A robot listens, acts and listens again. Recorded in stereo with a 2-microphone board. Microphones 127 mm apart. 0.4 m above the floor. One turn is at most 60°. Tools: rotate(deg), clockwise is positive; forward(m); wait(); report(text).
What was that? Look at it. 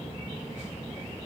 wait()
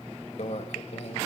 rotate(-60)
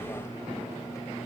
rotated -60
wait()
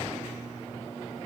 wait()
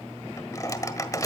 rotate(-30)
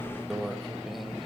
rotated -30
report("Facing the microwave, 1 to 2 m away.")